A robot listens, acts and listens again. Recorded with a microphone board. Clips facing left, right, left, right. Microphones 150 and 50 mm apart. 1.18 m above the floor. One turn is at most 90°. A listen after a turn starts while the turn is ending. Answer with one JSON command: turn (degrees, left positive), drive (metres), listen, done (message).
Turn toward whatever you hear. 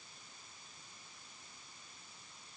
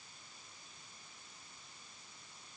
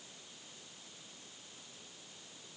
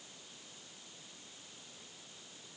{"listen": true}
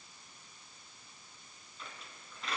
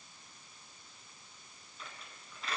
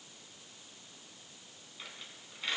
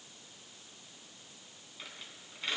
{"turn": 30}
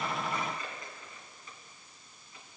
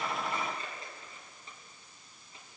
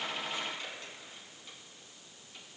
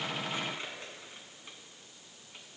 {"turn": -30}
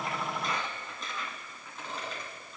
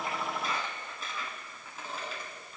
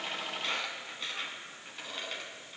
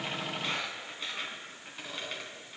{"done": "Facing the squeak."}